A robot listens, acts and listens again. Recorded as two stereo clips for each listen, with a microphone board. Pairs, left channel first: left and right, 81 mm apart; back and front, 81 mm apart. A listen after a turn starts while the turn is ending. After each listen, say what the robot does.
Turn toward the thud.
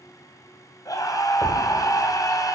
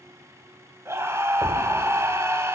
Turn 125° left.
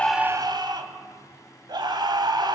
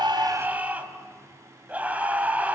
I heard a thud from this way, but can't make it out now.